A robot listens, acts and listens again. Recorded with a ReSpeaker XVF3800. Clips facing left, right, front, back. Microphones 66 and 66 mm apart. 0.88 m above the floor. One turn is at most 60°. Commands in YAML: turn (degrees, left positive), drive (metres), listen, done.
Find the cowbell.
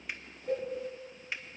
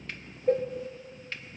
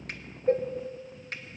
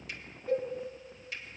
turn: -50
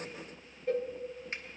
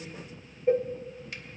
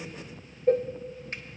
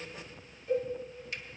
turn: -25
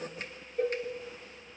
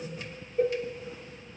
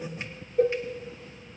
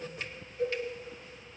done: "Facing the cowbell."